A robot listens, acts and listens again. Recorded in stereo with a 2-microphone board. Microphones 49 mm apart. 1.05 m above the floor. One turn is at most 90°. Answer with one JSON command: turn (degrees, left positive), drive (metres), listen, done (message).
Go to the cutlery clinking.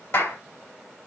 {"listen": true}
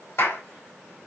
{"listen": true}
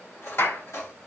{"turn": 70}
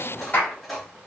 {"drive": 1.0}
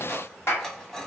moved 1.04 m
{"turn": 15}
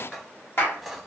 {"drive": 1.0}
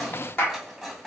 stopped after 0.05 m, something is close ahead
{"done": "Arrived at the cutlery clinking, straight ahead."}